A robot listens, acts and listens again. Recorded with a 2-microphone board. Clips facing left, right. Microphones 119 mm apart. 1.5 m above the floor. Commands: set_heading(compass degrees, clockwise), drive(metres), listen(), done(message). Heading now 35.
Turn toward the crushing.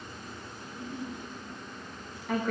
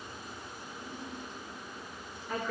listen()
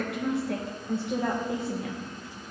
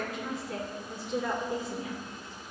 listen()
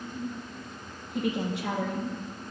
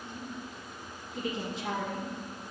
done("I can't make out crushing to turn to.")